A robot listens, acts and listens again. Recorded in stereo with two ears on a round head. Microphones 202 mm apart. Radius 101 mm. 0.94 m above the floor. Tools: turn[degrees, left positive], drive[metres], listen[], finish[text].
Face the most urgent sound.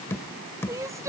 Action: turn[-30]
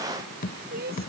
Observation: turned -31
Thought: So it is at 135° right.
Action: turn[-135]
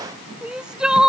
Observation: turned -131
Action: finish[Found it: crying, straight ahead.]